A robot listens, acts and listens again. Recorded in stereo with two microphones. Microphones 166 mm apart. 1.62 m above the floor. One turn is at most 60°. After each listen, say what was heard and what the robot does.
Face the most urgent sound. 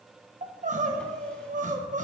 The crying: about 50° right or 130° right. Turn 50° right.
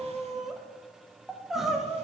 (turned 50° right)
Facing the crying.